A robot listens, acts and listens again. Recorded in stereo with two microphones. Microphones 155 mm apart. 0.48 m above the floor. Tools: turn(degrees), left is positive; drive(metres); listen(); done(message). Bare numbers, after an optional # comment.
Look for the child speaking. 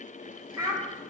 # The child speaking: about 20° right or 160° right.
turn(-20)
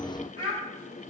# So it is at 140° right.
turn(-140)
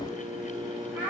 # The child speaking is now 10° right.
turn(-10)
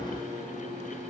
listen()
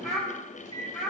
done("Found it: a child speaking, straight ahead, 1 to 2 m away.")